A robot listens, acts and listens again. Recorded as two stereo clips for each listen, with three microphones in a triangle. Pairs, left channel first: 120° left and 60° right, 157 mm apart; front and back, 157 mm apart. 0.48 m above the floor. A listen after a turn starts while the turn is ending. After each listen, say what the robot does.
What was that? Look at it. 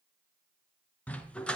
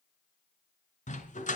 Turn 35° left.
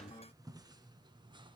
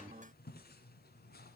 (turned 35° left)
Keep listening.
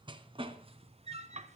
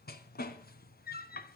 Turn 15° right.
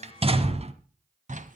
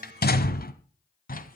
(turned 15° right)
Turn 25° right.
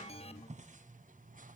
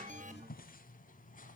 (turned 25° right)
Keep listening.
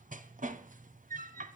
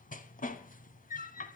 Turn 30° right.
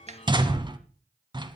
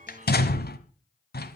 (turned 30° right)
Found it: a dog barking, straight ahead, 1 to 2 m away.